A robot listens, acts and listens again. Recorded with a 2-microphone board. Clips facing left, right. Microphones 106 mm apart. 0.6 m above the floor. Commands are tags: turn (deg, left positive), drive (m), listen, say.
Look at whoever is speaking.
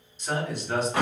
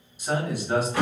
<turn deg="-30"/>
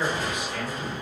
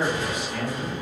<turn deg="-140"/>
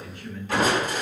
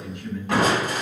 <turn deg="-20"/>
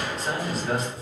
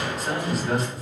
<say>Facing the man speaking, 1 to 2 m away.</say>